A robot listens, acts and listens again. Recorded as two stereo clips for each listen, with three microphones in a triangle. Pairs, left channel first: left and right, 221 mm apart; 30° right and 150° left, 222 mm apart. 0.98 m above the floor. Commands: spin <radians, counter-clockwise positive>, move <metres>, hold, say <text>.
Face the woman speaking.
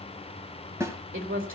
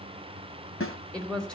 spin -2.01
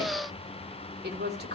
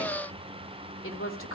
spin -0.87
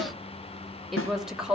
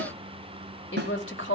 say Facing the woman speaking, 2 to 4 m away.